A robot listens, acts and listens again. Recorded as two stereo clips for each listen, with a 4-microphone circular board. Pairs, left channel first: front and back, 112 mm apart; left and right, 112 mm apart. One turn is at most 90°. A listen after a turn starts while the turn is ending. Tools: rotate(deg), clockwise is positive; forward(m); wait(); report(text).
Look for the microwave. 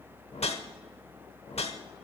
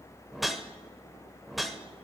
wait()
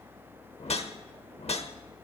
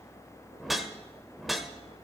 wait()
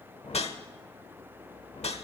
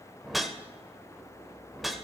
report("I can't make out a microwave, only a whoosh.")